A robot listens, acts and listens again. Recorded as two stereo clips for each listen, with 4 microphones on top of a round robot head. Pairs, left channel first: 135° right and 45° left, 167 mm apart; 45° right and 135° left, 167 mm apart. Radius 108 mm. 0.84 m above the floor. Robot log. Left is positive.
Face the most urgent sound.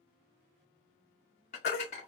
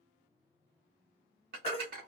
note: The baby crying: 105° right.
cmd yaw -105
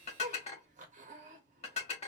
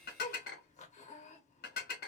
cmd idle
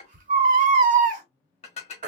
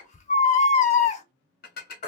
end: Facing the baby crying.